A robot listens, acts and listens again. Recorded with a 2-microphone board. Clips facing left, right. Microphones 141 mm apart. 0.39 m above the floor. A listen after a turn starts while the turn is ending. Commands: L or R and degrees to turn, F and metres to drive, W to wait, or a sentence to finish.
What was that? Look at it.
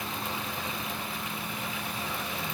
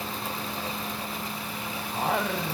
R90
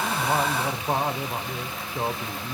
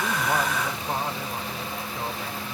L30
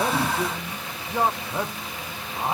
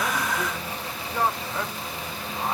L15
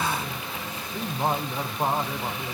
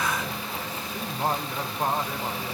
Facing the singing.